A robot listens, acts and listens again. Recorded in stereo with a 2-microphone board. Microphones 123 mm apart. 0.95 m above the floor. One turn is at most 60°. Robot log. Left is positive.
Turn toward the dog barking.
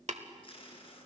cmd idle
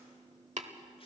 cmd idle
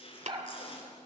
note: The dog barking: about 35° right or 145° right.
cmd yaw -35
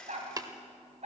note: So it is at 120° right.
cmd yaw -60
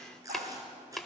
note: Nothing new. It was at 60° right.
cmd yaw -60
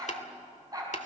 note: The dog barking is now 30° right.
cmd yaw -30
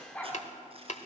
note: The dog barking is now 10° left.
cmd yaw +10
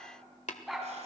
end: Found it: a dog barking, straight ahead, 2 to 4 m away.